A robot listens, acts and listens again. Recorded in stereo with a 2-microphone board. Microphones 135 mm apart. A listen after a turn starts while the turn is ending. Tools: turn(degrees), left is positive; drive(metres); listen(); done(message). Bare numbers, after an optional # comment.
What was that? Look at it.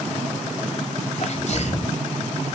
# The sneeze: about 60° left or 120° left.
turn(60)
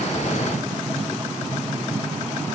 listen()
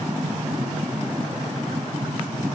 done("I heard a sneeze, but can't make it out now. It was about straight ahead or 60° left.")